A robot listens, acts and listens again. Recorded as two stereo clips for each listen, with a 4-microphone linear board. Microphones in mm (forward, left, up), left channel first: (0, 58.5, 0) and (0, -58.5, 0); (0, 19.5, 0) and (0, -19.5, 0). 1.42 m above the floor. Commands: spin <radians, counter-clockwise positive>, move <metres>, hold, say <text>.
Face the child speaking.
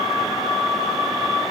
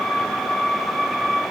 hold
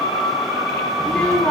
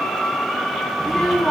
spin 0.52
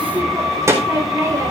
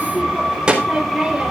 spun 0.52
spin -0.44
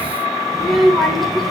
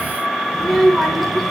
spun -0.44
say Found it: a child speaking, straight ahead, over 4 m away.